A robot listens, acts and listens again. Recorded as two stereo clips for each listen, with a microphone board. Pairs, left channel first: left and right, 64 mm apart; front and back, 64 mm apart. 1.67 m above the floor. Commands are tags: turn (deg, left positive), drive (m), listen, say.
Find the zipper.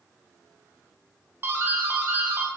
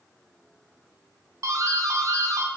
<listen/>
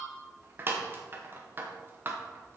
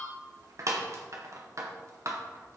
<listen/>
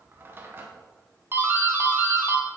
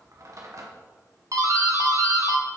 <say>I can't make out a zipper, only a doorbell.</say>